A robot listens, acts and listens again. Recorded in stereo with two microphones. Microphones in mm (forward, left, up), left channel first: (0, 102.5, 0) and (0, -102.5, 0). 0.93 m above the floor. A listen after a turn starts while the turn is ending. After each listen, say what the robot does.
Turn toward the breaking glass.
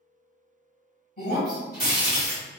Turn 45° left.
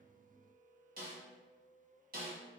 Keep listening.
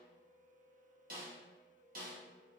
I heard breaking glass, but can't make it out now. It was about straight ahead or 90° left.